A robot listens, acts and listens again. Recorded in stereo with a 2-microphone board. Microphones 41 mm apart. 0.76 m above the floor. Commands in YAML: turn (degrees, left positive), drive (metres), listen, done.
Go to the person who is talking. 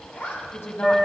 turn: 75
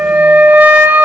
listen: true
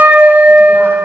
listen: true
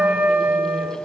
done: "I heard a woman speaking, but can't make it out now. It was about straight ahead or 30° left. I did not reach it."